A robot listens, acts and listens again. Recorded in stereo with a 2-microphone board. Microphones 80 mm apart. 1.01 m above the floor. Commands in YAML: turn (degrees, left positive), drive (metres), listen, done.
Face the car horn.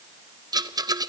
listen: true
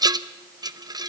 listen: true
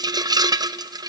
done: "I can't make out a car horn to turn to."